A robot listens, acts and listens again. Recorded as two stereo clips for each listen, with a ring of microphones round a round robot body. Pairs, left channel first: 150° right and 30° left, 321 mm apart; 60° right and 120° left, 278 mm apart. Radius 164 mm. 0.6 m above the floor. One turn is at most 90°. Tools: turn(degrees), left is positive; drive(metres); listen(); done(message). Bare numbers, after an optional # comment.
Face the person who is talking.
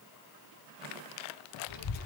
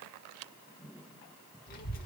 # The child speaking: 120° right.
turn(-90)
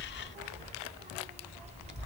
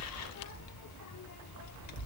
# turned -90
# The child speaking is now 40° right.
turn(-40)
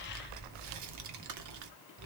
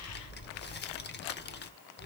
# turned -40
done("Found it: a child speaking, straight ahead.")